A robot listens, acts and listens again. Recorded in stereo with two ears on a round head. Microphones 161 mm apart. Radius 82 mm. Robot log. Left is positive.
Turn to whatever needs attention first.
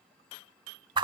cmd idle
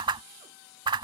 cmd idle
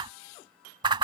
end: I can't make out anything urgent, only a whoosh.